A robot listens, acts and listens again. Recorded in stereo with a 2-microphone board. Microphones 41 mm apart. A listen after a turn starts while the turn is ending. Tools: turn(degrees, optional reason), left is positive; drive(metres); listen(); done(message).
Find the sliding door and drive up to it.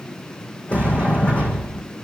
turn(degrees=30, reason="The sliding door: about 30° left or 150° left.")
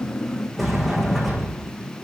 drive(metres=1.0)
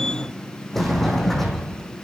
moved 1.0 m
drive(metres=1.0)
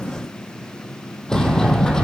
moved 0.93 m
turn(degrees=15, reason="The sliding door is now 15° left.")
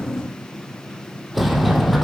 drive(metres=1.0)
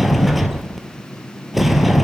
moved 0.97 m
drive(metres=1.0)
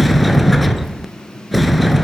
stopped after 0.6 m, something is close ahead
done("I am next to the sliding door.")